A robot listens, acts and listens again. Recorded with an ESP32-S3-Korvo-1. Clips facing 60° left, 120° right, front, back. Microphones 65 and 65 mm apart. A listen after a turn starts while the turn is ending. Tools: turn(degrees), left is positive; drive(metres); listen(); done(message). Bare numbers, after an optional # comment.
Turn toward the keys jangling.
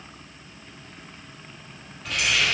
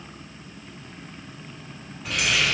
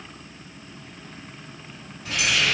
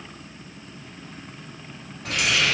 # The keys jangling: 150° left.
turn(150)
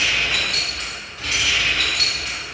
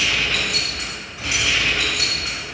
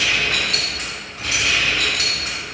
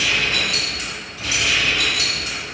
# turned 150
# The keys jangling is now 55° right.
turn(-55)
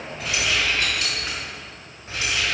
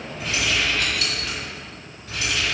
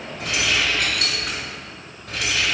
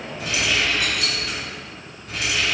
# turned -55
done("Facing the keys jangling.")